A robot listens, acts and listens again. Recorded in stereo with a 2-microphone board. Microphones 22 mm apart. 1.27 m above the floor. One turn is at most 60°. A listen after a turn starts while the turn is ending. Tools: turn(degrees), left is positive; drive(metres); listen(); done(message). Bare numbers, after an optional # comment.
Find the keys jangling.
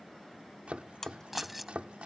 turn(-30)
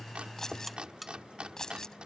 # So it is at 30° left.
turn(30)
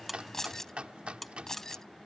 # The keys jangling is now 25° left.
turn(25)
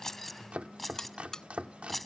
# The keys jangling is now 10° left.
turn(10)
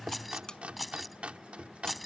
done("Found it: keys jangling, straight ahead.")